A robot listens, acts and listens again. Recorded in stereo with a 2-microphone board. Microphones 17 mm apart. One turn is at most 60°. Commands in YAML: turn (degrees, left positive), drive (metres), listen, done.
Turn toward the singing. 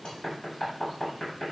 listen: true
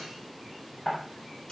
listen: true
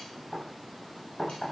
done: "I can't make out singing to turn to."